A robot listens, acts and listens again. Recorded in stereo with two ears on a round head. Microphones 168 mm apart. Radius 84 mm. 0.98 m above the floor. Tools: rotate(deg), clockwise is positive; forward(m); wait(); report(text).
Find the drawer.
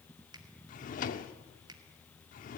rotate(-45)
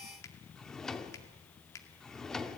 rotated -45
report("Found it: a drawer, straight ahead.")